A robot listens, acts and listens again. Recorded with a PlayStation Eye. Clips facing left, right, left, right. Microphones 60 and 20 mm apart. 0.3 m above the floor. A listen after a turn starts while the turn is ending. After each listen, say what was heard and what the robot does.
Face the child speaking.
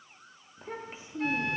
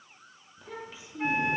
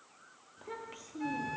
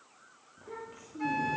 The child speaking: about 40° left or 140° left. Turn 40° left.
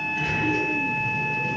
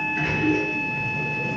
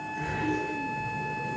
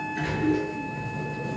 Keep listening.
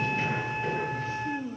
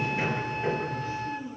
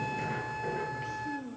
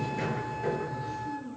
So it is at 100° left. Turn 100° left.
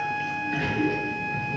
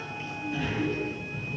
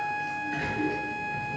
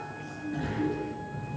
Keep listening.
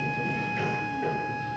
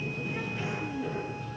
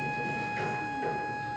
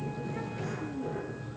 Keep listening.
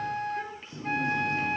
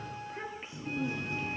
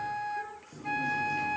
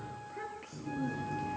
The child speaking is now 20° right. Turn 20° right.
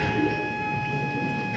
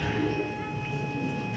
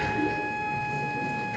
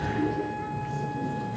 Keep listening.
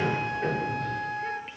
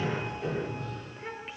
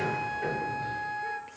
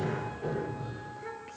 Keep listening.
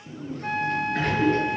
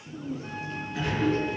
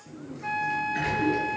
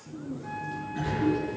Found it: a child speaking, straight ahead.